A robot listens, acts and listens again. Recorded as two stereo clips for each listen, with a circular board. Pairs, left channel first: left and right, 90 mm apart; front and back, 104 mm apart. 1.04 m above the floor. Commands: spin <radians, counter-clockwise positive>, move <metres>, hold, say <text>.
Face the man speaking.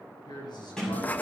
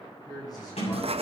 spin 0.96
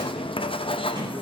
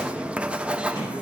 hold
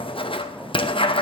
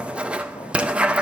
hold
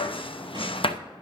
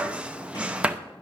say Facing where the man speaking came from. I can't hear it now.